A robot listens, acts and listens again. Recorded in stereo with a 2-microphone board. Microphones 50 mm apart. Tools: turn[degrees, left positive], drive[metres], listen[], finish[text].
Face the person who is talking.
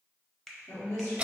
Action: turn[90]
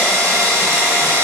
Action: listen[]
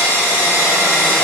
Action: listen[]
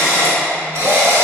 Action: finish[I heard a woman speaking from this way, but can't make it out now.]